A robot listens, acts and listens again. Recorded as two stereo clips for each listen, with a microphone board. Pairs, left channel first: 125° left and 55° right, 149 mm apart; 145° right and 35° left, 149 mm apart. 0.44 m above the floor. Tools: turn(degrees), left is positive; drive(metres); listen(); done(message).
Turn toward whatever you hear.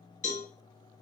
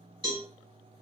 turn(degrees=90)
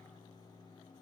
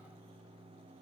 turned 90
listen()
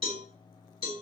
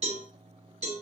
done("Found it: a cowbell, straight ahead, 1 to 2 m away.")